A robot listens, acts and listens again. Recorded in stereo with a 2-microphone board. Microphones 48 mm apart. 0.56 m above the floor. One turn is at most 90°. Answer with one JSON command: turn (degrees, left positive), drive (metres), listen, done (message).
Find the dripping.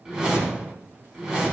{"listen": true}
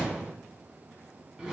{"listen": true}
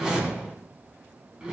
{"done": "I can't make out dripping to turn to."}